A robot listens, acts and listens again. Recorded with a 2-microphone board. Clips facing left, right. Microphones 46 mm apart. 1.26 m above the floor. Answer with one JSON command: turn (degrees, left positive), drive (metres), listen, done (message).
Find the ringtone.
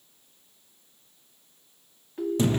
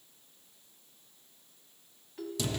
{"turn": 25}
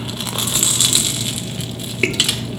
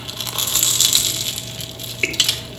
{"listen": true}
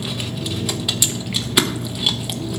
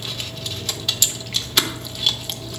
{"listen": true}
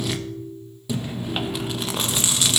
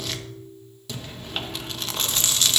{"turn": 130}
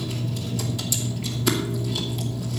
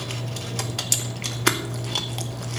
{"listen": true}
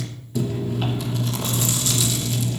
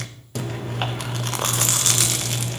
{"listen": true}
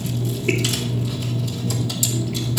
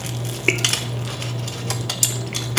{"done": "Facing where the ringtone came from. I can't hear it now."}